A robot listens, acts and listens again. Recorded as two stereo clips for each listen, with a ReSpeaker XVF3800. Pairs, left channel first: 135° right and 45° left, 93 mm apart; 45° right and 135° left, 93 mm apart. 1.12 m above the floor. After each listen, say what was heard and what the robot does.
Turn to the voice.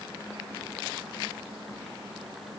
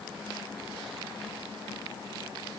Keep listening.
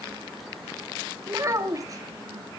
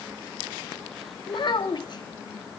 Found it: a child speaking, straight ahead.